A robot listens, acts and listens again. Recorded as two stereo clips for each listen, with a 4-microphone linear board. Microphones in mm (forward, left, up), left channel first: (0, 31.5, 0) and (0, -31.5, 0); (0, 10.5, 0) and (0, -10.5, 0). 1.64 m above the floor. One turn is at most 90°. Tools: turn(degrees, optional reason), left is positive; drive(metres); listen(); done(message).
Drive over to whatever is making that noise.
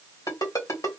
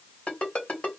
turn(degrees=70, reason="The ringtone: about 70° left or 110° left.")
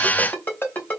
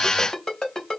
turn(degrees=30, reason="So it is at 30° left.")
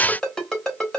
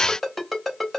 drive(metres=1.0)
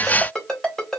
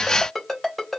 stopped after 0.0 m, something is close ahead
done("Something is in my way. I am facing the ringtone but have not reached it.")